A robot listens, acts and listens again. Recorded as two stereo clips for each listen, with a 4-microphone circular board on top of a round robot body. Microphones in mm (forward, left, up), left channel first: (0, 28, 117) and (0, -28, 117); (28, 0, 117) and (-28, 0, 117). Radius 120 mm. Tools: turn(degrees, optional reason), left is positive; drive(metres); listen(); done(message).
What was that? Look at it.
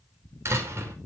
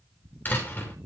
turn(degrees=-55, reason="The door slam: 55° right.")
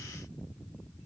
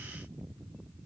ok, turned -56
done("I heard a door slam from this way, but can't make it out now.")